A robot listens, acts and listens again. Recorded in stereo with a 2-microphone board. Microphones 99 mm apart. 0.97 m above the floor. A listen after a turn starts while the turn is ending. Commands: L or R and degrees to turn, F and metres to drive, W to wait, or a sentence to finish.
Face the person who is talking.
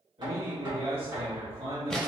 R70
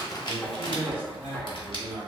R15
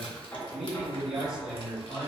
Facing the man speaking, 1 to 2 m away.